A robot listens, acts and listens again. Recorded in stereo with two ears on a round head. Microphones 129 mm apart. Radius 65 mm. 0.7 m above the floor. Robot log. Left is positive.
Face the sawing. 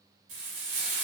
cmd idle
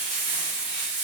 cmd idle
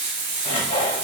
note: The sawing: about 40° left or 140° left.
cmd yaw +40
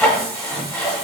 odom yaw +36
end: Facing the sawing.